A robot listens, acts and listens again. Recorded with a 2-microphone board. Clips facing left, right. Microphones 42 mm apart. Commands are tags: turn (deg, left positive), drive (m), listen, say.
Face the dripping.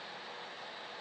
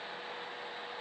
<listen/>
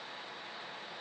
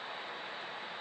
<listen/>
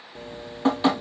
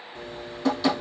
<turn deg="35"/>
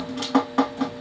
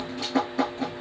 <turn deg="110"/>
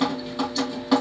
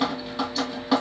<say>Found it: dripping, straight ahead.</say>